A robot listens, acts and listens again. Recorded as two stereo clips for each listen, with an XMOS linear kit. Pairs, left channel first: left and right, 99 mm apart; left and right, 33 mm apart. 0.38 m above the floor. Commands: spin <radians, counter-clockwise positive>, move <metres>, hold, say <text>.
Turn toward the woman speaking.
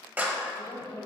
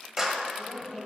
spin 1.13
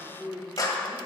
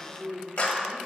spin 0.70
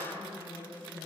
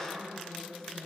spin 0.35
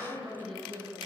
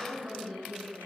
say Facing the woman speaking.